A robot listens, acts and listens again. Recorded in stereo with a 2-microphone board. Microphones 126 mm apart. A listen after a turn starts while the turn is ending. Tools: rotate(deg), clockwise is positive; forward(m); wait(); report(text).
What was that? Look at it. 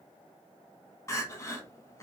rotate(-25)
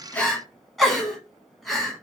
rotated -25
report("Facing the crying, 1 to 2 m away.")